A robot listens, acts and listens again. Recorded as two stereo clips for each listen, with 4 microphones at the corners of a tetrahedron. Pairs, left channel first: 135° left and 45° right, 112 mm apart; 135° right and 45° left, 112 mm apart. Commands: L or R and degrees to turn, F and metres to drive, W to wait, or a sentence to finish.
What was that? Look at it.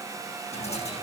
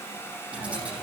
L125
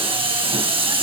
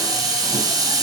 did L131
R10
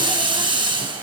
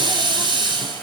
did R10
Found it: a hiss, straight ahead.